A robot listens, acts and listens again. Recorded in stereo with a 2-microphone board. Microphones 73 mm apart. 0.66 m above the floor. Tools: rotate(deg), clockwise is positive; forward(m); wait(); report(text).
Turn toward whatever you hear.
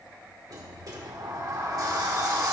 rotate(55)
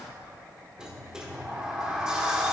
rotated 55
rotate(10)
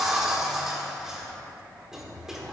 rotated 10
report("Found it: a sliding door, straight ahead, 1 to 2 m away.")